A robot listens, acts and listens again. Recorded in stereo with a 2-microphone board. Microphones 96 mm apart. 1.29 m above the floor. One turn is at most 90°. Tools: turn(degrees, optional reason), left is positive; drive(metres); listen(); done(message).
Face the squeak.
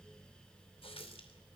listen()
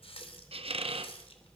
turn(degrees=-90)
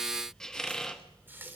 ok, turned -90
done("Facing the squeak, 1 to 2 m away.")